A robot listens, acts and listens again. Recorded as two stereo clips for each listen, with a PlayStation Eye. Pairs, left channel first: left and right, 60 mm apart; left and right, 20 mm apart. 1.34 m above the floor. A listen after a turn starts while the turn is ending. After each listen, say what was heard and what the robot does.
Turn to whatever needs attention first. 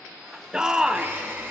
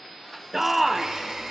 Turn 30° right.
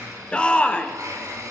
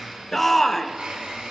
So it is at 20° left. Turn 20° left.
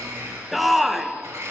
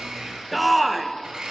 Found it: a shout, straight ahead, under 1 m away.